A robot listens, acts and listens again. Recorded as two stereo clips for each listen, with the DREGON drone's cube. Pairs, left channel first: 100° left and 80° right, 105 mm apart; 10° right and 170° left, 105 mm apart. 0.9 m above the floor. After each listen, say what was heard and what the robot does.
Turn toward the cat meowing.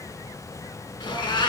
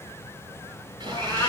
The cat meowing: 55° left. Turn 55° left.
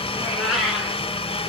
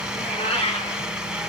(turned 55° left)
The cat meowing is now 10° left. Turn 10° left.
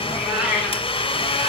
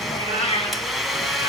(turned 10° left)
Facing the cat meowing, over 4 m away.